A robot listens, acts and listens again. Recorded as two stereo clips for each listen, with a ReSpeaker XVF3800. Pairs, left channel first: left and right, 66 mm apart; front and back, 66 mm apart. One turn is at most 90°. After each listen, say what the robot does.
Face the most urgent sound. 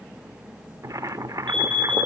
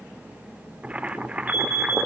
Turn 15° left.
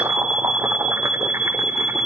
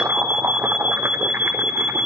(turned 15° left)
Facing the alarm.